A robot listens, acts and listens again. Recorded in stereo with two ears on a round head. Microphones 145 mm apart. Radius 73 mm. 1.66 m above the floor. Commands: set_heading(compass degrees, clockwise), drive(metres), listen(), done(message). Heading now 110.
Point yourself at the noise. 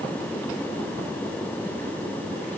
listen()
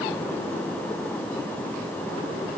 listen()
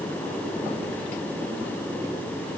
done("I can't make out anything.")